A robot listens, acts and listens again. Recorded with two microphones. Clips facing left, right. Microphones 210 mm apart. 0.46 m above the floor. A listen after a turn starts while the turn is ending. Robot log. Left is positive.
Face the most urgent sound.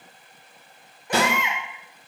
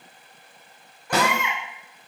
note: The baby crying: about 20° left or 160° left.
cmd yaw +20
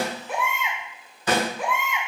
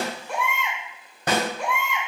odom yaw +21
end: Found it: a baby crying, straight ahead, under 1 m away.